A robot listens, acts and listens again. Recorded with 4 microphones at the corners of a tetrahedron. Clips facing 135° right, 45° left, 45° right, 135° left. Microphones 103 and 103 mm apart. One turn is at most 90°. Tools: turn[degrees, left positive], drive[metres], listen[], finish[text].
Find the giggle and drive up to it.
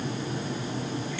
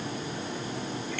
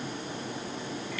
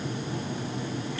Action: listen[]
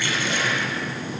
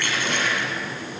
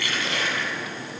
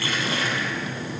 Action: listen[]
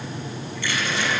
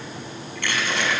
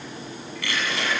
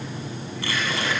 Action: finish[I can't make out a giggle to turn to.]